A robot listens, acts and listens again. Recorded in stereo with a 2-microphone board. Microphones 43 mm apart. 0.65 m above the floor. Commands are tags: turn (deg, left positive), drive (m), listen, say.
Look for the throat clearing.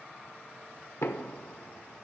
<listen/>
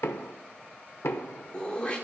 <turn deg="20"/>
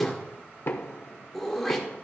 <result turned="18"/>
<say>Facing the throat clearing.</say>